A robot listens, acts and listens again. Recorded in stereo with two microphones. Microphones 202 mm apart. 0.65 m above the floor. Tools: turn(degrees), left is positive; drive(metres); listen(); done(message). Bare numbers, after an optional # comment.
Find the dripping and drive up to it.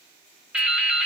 turn(-30)
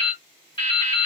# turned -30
# So it is at 25° left.
turn(25)
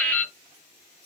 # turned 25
# The dripping is now 10° left.
turn(10)
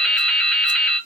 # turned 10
drive(1.0)
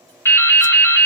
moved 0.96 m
# The dripping is now 10° left.
turn(10)
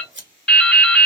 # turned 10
drive(1.0)
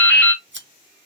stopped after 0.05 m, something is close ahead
# The dripping is now 10° left.
turn(10)
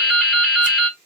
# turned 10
done("I am next to the dripping.")